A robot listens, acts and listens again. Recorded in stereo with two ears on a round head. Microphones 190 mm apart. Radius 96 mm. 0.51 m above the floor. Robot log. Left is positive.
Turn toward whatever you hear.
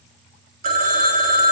note: The phone ringing: about 40° right or 140° right.
cmd yaw -40
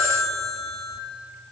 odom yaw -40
end: Facing the phone ringing, 2 to 4 m away.